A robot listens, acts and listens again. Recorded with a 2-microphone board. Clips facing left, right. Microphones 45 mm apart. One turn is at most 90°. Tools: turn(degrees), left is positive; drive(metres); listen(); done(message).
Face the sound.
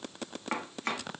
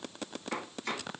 turn(degrees=50)
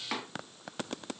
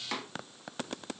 turn(degrees=15)
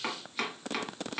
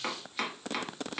done("Found it: chopping, straight ahead, 1 to 2 m away.")